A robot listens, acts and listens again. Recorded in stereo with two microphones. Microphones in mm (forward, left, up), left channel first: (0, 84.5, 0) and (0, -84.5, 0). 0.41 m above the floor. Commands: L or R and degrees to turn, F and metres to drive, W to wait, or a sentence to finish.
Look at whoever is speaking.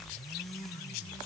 W
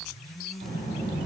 R70
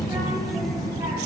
R25
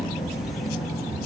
Found it: a child speaking, straight ahead.